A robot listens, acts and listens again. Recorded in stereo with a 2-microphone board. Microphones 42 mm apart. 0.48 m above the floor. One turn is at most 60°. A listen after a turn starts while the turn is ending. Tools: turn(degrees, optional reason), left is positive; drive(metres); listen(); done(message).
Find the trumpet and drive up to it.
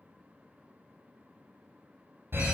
listen()
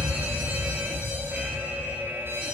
listen()
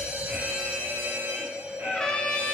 turn(degrees=20, reason="The trumpet: about 20° left or 160° left.")
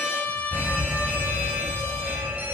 turn(degrees=60, reason="So it is at 140° left.")
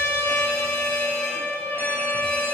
turn(degrees=60, reason="The trumpet is now 80° left.")
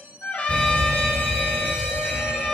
turn(degrees=20, reason="Nothing new. It was at 20° left.")
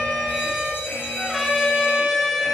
drive(metres=1.0)
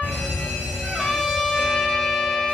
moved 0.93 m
turn(degrees=10, reason="The trumpet is now 10° left.")
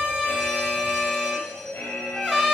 drive(metres=1.0)
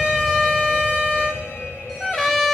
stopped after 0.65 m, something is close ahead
done("I am next to the trumpet.")